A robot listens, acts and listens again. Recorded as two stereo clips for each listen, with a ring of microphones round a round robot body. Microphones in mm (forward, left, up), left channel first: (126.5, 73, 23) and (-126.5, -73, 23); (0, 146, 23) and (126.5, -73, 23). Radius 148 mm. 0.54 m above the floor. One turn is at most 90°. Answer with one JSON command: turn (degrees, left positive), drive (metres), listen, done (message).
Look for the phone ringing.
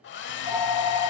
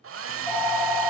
{"turn": 30}
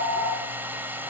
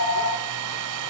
{"turn": -15}
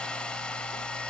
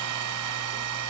{"listen": true}
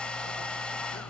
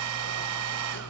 {"listen": true}
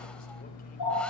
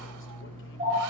{"done": "Facing the phone ringing."}